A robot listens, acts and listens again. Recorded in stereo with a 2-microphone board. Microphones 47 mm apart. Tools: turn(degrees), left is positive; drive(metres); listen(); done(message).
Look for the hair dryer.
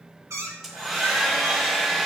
turn(degrees=-30)
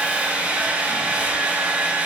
turn(degrees=-140)
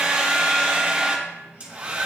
turn(degrees=-30)
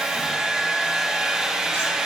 turn(degrees=-15)
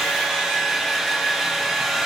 done("Facing the hair dryer.")